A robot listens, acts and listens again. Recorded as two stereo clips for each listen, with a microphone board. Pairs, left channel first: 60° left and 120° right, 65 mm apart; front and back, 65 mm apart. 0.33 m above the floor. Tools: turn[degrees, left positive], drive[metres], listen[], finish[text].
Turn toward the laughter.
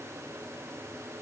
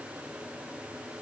Action: listen[]
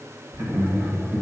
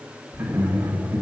Thought: The laughter: 145° right.
Action: turn[-145]
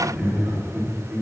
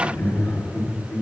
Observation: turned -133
Thought: The laughter is now 30° right.
Action: turn[-30]
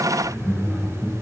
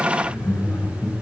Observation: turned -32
Action: finish[Facing the laughter.]